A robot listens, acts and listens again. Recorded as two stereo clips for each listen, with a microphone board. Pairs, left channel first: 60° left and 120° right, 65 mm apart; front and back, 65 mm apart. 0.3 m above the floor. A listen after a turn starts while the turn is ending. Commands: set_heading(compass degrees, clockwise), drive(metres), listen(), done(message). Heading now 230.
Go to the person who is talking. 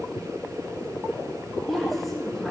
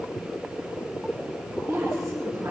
set_heading(80)
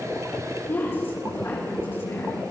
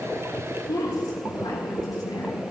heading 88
set_heading(78)
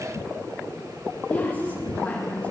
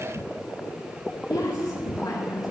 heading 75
drive(1.0)
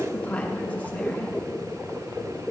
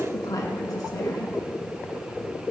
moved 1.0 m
drive(1.0)
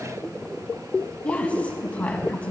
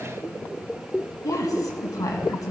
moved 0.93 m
drive(1.0)
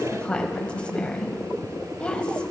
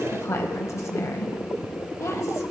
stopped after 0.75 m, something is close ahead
done("I am next to the woman speaking.")